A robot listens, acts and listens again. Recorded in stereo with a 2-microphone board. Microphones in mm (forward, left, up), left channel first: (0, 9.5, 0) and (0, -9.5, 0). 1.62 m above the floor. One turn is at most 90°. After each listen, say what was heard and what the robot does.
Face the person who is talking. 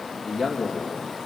The man speaking: about 20° right or 160° right. Turn 20° right.
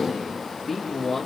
Found it: a man speaking, straight ahead.